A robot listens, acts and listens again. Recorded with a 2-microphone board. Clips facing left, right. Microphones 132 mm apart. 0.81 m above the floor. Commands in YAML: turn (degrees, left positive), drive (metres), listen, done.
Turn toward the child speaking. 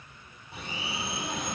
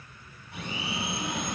turn: 20
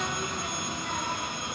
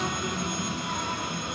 turn: -15
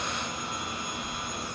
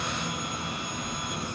turn: -15
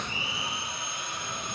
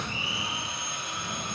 turn: -15
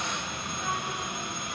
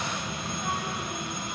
done: "Found it: a child speaking, straight ahead, 2 to 4 m away."